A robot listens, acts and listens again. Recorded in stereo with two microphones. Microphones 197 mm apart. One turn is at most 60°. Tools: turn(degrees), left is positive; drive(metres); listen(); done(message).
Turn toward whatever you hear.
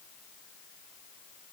listen()
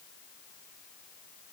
listen()
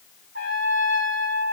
turn(degrees=-60)
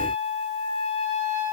turn(degrees=-55)
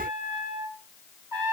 turn(degrees=-15)
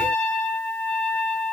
done("Facing the trumpet, over 4 m away.")